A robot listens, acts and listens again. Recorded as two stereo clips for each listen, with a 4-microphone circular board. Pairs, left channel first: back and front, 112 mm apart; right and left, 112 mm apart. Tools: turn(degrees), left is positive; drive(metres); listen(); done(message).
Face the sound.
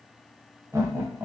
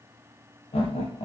turn(degrees=-65)
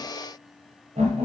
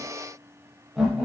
done("Facing the laughter, under 1 m away.")